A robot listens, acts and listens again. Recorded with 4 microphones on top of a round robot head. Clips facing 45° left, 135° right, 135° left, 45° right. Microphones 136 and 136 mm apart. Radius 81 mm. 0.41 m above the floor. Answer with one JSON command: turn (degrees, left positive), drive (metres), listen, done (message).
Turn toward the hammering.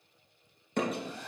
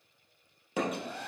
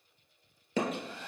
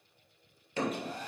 {"turn": 140}
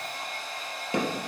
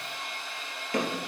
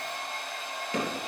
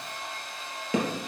{"turn": -25}
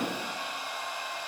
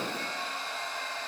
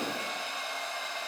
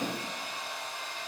{"listen": true}
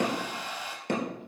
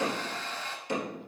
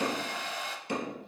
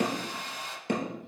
{"done": "Facing the hammering, 2 to 4 m away."}